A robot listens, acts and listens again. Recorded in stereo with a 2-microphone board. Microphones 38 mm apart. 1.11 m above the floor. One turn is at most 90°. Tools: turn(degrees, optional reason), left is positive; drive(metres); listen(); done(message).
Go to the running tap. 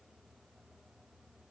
listen()
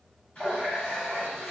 turn(degrees=40, reason="The running tap: about 40° left or 140° left.")
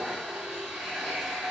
drive(metres=1.0)
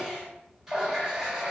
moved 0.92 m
turn(degrees=-10, reason="The running tap is now 10° right.")
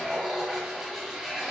drive(metres=1.0)
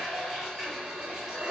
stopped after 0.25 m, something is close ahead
done("I am next to the running tap.")